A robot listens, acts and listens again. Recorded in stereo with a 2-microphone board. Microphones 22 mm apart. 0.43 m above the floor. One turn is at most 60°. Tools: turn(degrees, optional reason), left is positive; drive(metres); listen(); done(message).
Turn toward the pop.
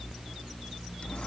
listen()
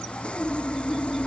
listen()
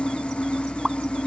turn(degrees=-20, reason="The pop: about 20° right or 160° right.")
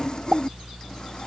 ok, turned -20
turn(degrees=-60, reason="So it is at 145° right.")
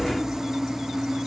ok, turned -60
turn(degrees=-60, reason="Nothing new. It was at 85° right.")
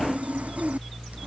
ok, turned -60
turn(degrees=-25, reason="Nothing new. It was at 25° right.")
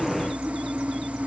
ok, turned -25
done("Facing where the pop came from. I can't hear it now.")